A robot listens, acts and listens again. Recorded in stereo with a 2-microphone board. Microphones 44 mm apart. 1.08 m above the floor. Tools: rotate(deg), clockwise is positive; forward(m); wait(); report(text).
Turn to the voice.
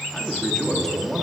rotate(-30)
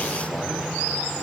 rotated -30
wait()
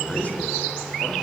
rotate(-140)
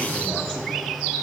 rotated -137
wait()
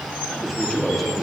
report("Facing the man speaking, 2 to 4 m away.")